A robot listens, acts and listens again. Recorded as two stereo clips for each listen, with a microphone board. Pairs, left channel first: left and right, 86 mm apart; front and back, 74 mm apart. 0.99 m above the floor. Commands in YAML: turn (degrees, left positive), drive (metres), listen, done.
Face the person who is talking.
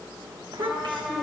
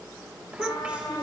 turn: -105
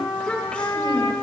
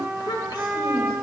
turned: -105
turn: 15
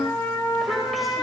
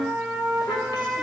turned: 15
listen: true
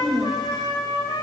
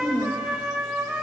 done: "Found it: a child speaking, straight ahead, 2 to 4 m away."